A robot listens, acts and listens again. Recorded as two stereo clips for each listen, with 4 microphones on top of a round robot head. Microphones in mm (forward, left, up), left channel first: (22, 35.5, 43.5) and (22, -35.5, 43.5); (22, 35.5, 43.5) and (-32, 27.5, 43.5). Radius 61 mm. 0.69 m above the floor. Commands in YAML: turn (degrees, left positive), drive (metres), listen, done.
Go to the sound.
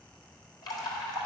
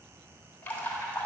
turn: 65
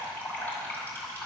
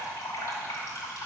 turn: 25
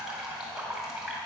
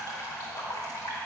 drive: 1.0
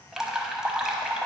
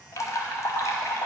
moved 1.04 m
turn: -10
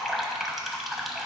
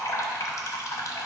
drive: 1.0
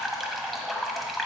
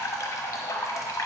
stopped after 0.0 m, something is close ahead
done: "Arrived at the dripping, straight ahead."